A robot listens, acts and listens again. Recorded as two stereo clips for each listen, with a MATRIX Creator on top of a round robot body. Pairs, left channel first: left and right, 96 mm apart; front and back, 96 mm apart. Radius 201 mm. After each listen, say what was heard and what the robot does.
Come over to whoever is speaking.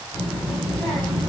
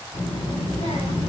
Drive 1.0 m forward.
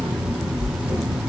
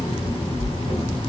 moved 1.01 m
Drive 1.0 m forward.
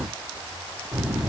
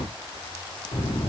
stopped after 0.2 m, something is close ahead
The child speaking is now 15° right. Turn 15° right.
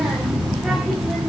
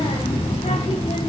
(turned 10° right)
Arrived at the child speaking, straight ahead.